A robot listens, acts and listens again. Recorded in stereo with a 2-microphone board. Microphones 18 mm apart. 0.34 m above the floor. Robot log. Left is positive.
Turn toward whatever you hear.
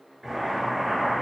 cmd yaw -30
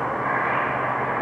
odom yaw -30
note: So it is at 145° right.
cmd yaw -145
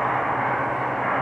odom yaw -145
end: Found it: boiling, straight ahead.